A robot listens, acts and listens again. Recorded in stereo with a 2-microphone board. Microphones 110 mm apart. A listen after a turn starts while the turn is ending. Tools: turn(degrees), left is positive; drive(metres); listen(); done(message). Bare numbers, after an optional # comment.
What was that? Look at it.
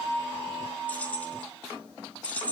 turn(30)
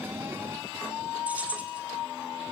# So it is at 15° right.
turn(-15)
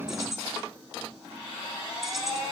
done("Facing the keys jangling, 2 to 4 m away.")